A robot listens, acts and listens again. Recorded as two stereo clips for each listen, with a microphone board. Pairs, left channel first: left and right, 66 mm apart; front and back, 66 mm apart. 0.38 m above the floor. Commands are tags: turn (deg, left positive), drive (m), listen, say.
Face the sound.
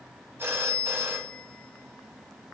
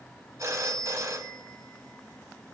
<turn deg="-140"/>
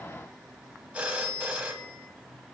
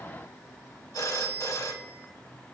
<turn deg="-20"/>
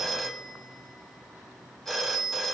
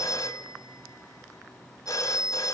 <say>Facing the phone ringing.</say>